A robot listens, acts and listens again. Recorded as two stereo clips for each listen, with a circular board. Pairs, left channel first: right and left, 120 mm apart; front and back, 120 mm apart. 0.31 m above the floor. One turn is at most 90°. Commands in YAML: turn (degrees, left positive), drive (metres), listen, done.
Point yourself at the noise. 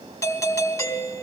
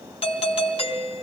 turn: -30
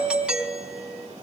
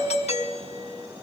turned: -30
turn: 10
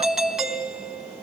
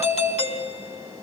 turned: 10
done: "Facing the doorbell, 2 to 4 m away."